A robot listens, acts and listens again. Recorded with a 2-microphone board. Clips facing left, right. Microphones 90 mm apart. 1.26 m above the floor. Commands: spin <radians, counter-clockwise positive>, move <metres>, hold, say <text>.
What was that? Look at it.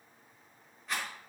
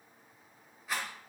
spin -0.52
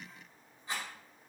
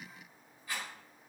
spin 0.52
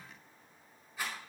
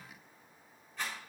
say Found it: a rattle, straight ahead, over 4 m away.